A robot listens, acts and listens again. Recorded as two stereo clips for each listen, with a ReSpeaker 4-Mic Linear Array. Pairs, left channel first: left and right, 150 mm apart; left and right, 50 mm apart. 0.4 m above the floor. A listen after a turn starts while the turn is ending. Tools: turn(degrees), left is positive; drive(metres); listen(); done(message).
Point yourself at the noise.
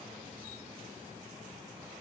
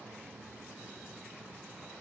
listen()
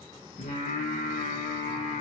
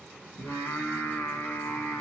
turn(degrees=60)
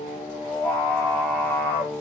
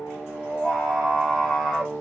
turn(degrees=10)
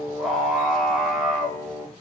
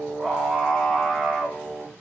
done("Facing the singing, 2 to 4 m away.")